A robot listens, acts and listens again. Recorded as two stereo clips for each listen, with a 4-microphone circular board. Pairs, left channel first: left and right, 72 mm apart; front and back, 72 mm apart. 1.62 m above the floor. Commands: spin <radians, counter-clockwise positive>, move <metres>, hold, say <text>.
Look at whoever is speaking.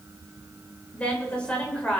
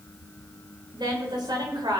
spin 2.88
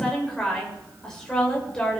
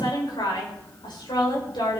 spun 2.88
spin 0.17
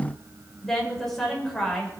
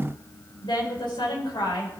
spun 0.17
say Facing the woman speaking, over 4 m away.